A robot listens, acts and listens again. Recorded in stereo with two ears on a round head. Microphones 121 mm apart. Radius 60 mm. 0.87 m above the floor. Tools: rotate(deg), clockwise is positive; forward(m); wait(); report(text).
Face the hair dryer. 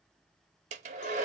rotate(55)
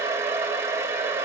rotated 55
rotate(20)
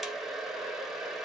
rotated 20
report("Found it: a hair dryer, straight ahead, under 1 m away.")